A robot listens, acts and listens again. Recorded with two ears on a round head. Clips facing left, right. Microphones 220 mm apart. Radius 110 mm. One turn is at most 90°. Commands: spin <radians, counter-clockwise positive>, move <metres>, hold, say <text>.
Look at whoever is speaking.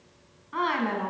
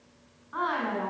spin 0.79
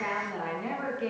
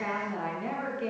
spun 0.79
say Found it: a woman speaking, straight ahead.